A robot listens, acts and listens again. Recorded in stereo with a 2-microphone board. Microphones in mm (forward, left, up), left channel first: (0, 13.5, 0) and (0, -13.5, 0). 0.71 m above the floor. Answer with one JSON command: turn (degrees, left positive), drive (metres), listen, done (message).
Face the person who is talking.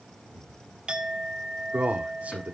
{"turn": -65}
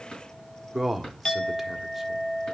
{"done": "Found it: a man speaking, straight ahead."}